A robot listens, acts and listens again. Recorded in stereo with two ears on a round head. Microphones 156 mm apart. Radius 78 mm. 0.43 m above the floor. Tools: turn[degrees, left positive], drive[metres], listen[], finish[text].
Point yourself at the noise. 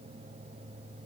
Action: listen[]
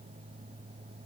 Action: listen[]
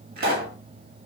Thought: The pop: about 55° right or 125° right.
Action: turn[-55]
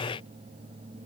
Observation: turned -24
Action: listen[]
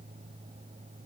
Action: finish[I heard a pop, but can't make it out now. It was about 30° right or 100° right.]